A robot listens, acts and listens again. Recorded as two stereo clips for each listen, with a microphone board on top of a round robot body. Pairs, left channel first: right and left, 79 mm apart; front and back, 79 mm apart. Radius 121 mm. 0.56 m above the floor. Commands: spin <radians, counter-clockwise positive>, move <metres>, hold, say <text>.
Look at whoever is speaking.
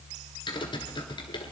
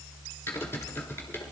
hold
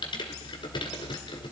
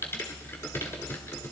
hold
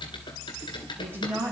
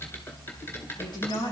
spin 0.52
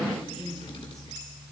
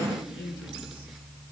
say Facing the woman speaking, over 4 m away.